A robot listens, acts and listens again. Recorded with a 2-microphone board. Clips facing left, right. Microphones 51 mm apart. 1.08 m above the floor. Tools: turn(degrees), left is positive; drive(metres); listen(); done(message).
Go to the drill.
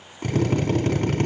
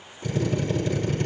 turn(degrees=55)
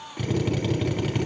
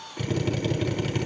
drive(metres=1.0)
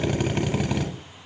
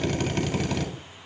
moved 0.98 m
turn(degrees=15)
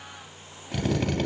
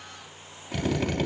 drive(metres=1.0)
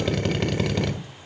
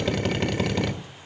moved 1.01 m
drive(metres=1.0)
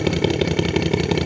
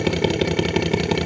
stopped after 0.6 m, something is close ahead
done("I am next to the drill.")